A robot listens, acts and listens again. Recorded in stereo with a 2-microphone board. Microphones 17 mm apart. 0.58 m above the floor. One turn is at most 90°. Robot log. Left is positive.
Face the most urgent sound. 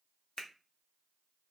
cmd idle
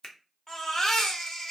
note: The baby crying: about 45° left or 135° left.
cmd yaw +45
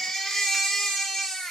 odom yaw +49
note: So it is at 80° left.
cmd yaw +80
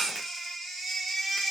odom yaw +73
note: The baby crying is now 10° left.
cmd yaw +10
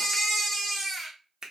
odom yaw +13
end: Found it: a baby crying, straight ahead.